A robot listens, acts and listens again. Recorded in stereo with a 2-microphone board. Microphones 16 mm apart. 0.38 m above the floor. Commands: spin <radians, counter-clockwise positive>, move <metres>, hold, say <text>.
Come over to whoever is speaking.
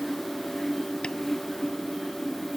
hold
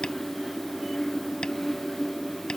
hold
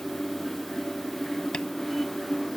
say I can't make out anyone speaking to turn to.